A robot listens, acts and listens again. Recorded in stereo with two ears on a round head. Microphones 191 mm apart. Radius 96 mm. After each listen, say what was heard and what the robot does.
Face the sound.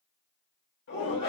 The shout: about 55° left or 125° left. Turn 55° left.
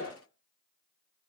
So it is at 70° left. Turn 70° left.
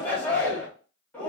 Facing the shout, 1 to 2 m away.